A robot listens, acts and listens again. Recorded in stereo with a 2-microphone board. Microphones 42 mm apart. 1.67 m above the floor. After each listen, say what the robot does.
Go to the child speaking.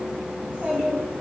Turn 40° right.
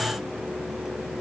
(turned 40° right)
Keep listening.
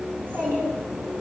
Turn 100° right.
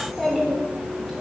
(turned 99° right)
Drive 1.0 m forward.
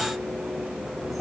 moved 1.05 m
Keep listening.
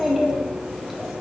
Drive 1.0 m forward.
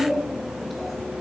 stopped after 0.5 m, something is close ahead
I am next to the child speaking.